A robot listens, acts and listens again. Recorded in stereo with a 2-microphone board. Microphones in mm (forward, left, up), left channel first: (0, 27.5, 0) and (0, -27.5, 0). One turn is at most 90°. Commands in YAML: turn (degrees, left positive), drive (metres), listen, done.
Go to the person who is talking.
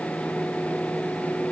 listen: true
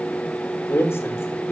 turn: 50
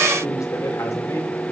turn: 80
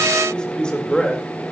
turn: 15
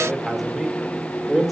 drive: 1.0
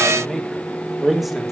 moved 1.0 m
drive: 1.0
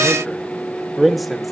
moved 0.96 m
drive: 1.0
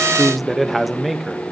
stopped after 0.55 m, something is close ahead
done: "I am next to the man speaking."